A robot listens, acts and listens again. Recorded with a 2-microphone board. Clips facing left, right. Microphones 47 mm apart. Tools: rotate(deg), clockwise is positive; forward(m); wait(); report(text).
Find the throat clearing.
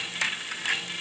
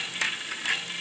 wait()
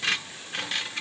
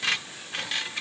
wait()
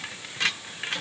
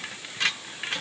report("I can't make out throat clearing.")